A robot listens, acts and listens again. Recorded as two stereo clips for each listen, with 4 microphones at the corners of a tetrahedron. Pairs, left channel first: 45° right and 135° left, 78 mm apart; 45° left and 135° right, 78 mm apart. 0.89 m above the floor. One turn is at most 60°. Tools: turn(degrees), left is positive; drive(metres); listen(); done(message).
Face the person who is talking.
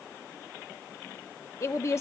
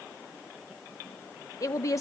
done("Facing the woman speaking.")